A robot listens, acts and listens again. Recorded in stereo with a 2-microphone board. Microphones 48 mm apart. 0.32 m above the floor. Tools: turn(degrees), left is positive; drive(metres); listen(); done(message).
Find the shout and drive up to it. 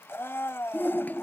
turn(degrees=45)
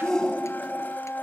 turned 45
turn(degrees=15)
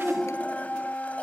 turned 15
drive(metres=1.0)
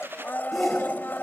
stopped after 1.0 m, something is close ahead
done("I am next to the shout.")